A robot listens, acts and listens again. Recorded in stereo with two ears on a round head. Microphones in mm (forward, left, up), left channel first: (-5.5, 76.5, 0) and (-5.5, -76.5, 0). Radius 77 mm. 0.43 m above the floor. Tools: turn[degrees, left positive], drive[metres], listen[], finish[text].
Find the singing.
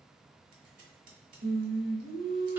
Thought: The singing: about 60° right or 120° right.
Action: turn[-60]
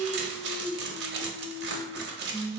Thought: So it is at 55° right.
Action: turn[-55]
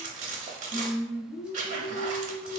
Thought: The singing is now 10° right.
Action: turn[-10]
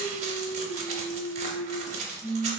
Action: finish[Facing the singing.]